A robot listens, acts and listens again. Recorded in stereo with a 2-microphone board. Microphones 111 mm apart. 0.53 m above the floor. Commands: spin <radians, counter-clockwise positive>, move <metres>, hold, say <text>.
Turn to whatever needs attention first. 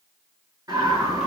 spin -0.52
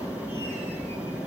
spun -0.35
spin -0.17
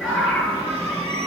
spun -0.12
say Found it: a scream, straight ahead, over 4 m away.